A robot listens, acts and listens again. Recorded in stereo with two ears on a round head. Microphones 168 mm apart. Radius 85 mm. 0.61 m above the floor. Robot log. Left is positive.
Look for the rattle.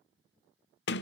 cmd idle
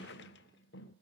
cmd idle
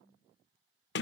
end: I can't make out a rattle, only a sliding door.